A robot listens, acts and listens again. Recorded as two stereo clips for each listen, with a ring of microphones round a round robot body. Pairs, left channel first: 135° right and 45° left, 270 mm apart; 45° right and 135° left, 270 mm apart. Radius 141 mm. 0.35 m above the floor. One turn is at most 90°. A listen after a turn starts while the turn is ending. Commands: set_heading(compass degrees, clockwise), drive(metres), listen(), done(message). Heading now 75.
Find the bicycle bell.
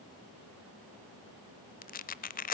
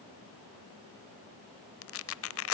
listen()
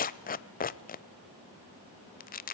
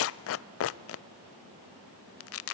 listen()
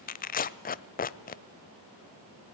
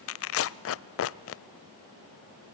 done("I can't make out a bicycle bell, only tearing paper.")